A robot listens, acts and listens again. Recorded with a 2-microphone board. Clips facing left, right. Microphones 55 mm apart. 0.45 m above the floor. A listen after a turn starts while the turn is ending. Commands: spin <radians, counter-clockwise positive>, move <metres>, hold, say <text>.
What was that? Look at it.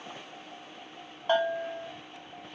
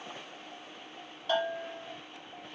spin 0.61
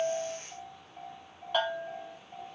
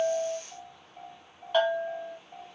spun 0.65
say Found it: a bell, straight ahead, under 1 m away.